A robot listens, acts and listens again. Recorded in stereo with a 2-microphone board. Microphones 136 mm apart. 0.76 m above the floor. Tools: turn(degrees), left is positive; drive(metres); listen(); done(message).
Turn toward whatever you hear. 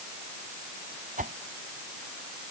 turn(degrees=-90)
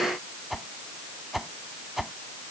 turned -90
done("Found it: a whoosh, straight ahead.")